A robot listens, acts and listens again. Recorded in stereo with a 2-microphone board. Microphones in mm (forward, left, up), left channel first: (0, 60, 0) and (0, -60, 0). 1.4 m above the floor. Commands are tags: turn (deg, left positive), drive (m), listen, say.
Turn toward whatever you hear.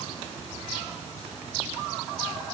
<listen/>
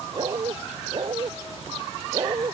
<turn deg="-45"/>
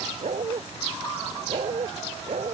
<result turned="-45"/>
<turn deg="-85"/>
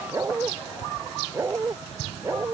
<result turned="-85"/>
<turn deg="-25"/>
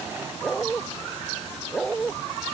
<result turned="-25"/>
<say>Facing the dog barking.</say>